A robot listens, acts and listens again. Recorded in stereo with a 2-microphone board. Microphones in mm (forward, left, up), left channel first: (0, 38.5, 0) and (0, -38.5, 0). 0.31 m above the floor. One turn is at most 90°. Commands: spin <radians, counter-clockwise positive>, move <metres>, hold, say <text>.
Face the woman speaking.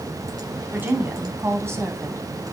spin -0.61
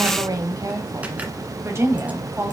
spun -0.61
spin -0.52
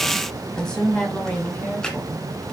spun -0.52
spin 0.26
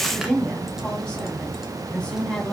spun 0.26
spin 0.17
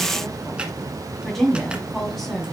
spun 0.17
say Facing the woman speaking, 2 to 4 m away.